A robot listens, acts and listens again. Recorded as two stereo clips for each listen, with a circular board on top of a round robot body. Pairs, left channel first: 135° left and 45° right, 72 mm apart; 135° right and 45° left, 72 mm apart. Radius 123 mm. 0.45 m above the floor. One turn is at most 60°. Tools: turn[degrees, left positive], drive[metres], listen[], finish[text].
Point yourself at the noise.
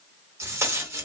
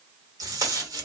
Thought: The tape being pulled: 10° left.
Action: turn[10]
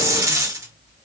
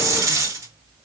Action: finish[Found it: tape being pulled, straight ahead, 1 to 2 m away.]